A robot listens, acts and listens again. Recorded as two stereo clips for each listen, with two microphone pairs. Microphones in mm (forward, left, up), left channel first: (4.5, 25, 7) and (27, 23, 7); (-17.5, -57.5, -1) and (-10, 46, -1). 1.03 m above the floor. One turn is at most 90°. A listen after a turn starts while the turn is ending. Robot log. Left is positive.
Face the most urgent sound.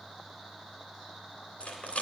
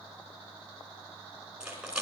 cmd idle
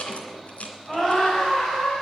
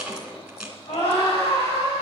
note: The scream: 105° right.
cmd yaw -90
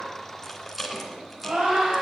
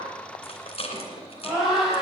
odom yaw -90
end: Facing the scream, over 4 m away.